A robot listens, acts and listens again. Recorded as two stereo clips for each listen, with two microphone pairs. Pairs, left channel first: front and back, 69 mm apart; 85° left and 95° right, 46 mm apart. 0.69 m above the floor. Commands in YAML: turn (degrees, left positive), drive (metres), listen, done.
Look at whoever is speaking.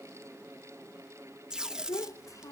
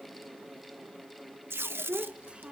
turn: -35
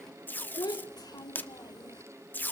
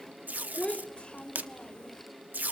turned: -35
turn: 15
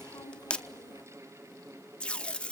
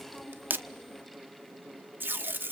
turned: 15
listen: true
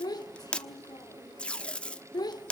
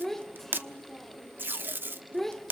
done: "Facing the child speaking."